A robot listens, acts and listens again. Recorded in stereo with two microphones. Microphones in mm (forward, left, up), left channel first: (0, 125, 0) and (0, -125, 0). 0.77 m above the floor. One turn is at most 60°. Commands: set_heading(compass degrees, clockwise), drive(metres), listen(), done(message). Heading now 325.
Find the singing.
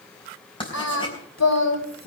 set_heading(265)
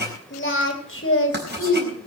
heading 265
set_heading(205)
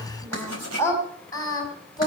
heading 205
set_heading(190)
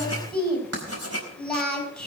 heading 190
done("Facing the singing, over 4 m away.")